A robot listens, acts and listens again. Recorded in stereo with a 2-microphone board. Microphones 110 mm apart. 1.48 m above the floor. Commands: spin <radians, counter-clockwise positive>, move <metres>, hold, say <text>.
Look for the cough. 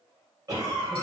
spin -0.52
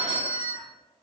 hold
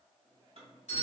hold
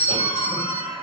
spin -2.09
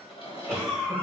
say Facing the cough, 1 to 2 m away.